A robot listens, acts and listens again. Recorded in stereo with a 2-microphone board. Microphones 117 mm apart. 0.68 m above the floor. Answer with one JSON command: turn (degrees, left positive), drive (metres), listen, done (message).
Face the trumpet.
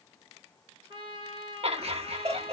{"turn": -45}
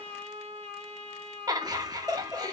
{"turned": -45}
{"turn": -90}
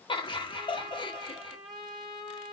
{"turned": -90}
{"done": "Facing the trumpet, 1 to 2 m away."}